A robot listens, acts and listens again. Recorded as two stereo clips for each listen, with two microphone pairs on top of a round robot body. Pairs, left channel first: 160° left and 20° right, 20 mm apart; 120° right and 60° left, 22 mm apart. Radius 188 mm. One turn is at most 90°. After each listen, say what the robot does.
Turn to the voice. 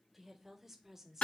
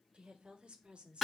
Turn 40° left.
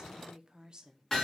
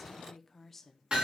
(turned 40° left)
Turn 55° right.
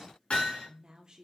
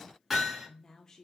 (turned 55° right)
Turn 65° right.
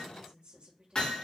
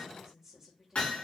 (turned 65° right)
Turn 15° right.
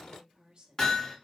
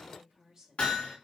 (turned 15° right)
Facing the woman speaking, 1 to 2 m away.